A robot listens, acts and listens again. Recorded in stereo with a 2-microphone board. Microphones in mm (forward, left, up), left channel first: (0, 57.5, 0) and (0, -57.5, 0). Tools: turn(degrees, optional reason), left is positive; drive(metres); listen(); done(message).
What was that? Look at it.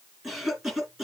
turn(degrees=-30)
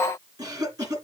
turn(degrees=-145, reason="So it is at 145° right.")
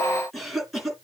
done("Facing the cough, 2 to 4 m away.")